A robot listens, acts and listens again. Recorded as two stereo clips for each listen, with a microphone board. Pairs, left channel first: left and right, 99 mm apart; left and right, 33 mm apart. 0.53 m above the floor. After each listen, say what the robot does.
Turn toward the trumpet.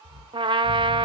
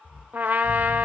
Turn 55° right.
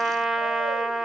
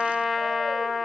Facing the trumpet, under 1 m away.